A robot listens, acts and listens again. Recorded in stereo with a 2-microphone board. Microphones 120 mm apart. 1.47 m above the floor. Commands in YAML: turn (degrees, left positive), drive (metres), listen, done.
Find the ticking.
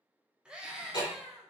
turn: 40
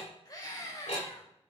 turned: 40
turn: 100
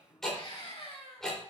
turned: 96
done: "Found it: ticking, straight ahead."